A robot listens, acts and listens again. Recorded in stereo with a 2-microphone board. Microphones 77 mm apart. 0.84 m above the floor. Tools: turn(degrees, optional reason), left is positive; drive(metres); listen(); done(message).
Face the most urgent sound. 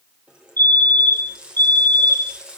turn(degrees=-65, reason="The fire alarm: about 65° right or 115° right.")
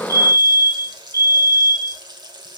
turn(degrees=-50, reason="So it is at 50° right.")
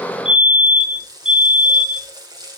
turn(degrees=-10, reason="The fire alarm is now 10° right.")
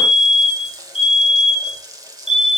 done("Facing the fire alarm.")